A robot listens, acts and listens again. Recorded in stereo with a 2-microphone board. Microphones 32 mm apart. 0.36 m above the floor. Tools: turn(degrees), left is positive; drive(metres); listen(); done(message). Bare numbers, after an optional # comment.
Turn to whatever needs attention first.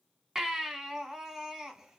# The baby crying: about 20° right or 160° right.
turn(-20)
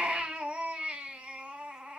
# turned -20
# So it is at 140° right.
turn(-140)
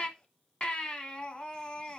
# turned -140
# The baby crying is now 35° left.
turn(35)
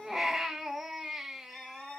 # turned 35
done("Facing the baby crying.")